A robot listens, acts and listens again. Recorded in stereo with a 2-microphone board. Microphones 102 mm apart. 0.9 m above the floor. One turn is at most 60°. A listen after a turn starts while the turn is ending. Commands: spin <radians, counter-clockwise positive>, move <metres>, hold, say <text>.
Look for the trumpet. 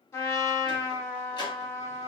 spin 0.52
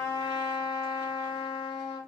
spin 1.05
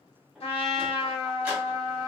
spin 1.05
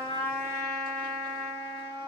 spin 0.26
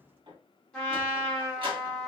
spin 0.17
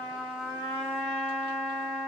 say Facing the trumpet.